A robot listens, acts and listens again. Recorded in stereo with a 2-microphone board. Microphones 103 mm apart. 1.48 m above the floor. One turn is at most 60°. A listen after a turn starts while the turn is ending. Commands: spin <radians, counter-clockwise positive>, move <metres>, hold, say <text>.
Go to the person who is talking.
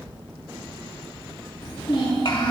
spin 0.96
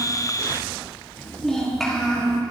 move 1.0
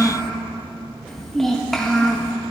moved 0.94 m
move 1.0
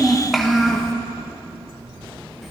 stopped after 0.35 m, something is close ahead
say Arrived at the child speaking, straight ahead.